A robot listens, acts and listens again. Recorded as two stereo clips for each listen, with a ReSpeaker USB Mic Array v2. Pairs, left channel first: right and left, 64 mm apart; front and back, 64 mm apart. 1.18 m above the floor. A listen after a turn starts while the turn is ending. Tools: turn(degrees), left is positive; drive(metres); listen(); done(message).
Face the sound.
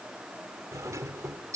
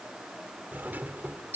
turn(degrees=120)
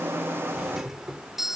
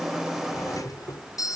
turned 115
done("Facing the doorbell.")